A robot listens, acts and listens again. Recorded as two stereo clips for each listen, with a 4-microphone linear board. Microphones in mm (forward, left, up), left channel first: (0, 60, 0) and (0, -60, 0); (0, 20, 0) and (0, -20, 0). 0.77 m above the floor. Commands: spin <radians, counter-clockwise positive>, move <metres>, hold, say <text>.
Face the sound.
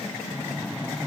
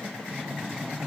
spin -0.52
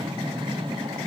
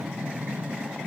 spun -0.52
spin -2.36
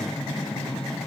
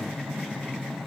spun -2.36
say Facing the breathing.